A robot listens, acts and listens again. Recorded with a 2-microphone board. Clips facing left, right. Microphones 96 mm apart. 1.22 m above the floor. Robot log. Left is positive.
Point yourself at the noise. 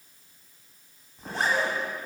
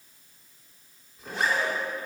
note: The zipper: about 35° left or 145° left.
cmd yaw +35
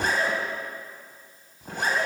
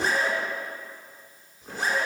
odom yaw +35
note: So it is at 105° left.
cmd yaw +105
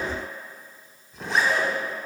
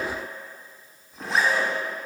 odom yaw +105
end: Found it: a zipper, straight ahead, 1 to 2 m away.